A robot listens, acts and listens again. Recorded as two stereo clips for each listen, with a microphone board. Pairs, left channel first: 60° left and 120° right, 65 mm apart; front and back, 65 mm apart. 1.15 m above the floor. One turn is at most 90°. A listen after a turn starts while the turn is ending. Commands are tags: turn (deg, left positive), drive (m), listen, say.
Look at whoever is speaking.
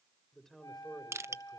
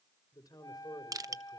<turn deg="-25"/>
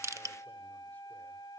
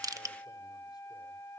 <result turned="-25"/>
<listen/>
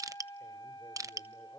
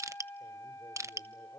<listen/>
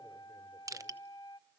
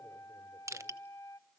<say>Facing where the man speaking came from. I can't hear it now.</say>